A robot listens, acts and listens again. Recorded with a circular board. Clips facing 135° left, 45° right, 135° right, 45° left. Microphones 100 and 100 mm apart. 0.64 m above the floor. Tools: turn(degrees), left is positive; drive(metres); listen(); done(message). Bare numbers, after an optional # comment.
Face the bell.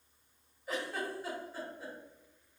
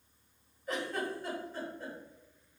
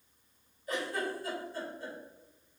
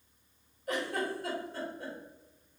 listen()
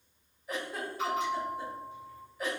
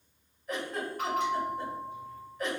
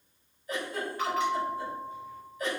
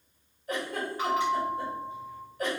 # The bell: 20° right.
turn(-20)
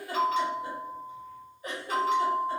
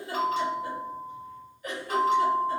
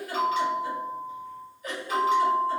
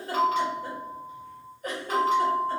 done("Facing the bell.")